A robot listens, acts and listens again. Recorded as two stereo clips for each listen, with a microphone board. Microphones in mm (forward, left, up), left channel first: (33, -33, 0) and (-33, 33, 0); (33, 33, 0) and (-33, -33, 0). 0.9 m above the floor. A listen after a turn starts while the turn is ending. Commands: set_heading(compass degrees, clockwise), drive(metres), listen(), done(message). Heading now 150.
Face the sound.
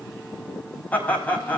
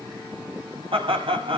set_heading(265)
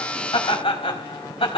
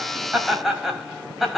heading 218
set_heading(263)
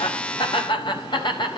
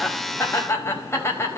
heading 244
set_heading(259)
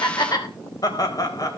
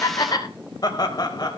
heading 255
done("Found it: laughter, straight ahead, 2 to 4 m away.")